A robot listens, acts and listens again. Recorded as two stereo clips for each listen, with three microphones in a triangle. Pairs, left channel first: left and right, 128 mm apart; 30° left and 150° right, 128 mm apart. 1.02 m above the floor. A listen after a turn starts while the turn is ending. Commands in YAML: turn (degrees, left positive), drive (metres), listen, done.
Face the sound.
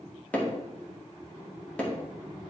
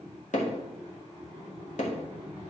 turn: 10
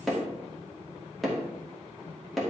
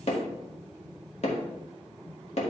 done: "Facing the hammering, 1 to 2 m away."